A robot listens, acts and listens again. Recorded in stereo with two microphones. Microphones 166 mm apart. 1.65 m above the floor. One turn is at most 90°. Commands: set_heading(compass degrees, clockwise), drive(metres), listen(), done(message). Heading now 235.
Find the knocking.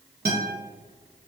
listen()
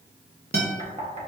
set_heading(275)
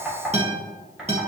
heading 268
set_heading(278)
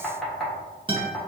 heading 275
done("Facing the knocking, 1 to 2 m away.")